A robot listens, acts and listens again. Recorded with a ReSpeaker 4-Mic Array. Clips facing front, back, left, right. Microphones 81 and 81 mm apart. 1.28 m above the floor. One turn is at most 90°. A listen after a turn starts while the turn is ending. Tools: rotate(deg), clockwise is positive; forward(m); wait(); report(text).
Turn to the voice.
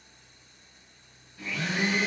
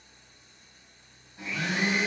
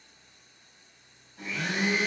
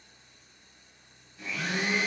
wait()
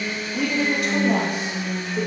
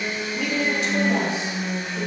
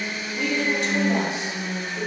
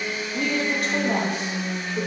rotate(45)
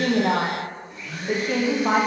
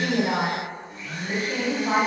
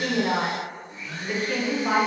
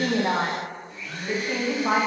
rotate(15)
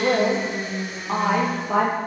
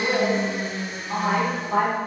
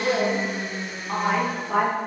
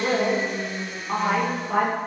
report("Facing the woman speaking, under 1 m away.")